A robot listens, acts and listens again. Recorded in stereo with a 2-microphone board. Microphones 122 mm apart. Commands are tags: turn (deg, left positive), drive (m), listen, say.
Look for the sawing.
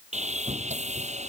<turn deg="-90"/>
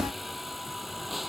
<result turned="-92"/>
<say>Facing the sawing.</say>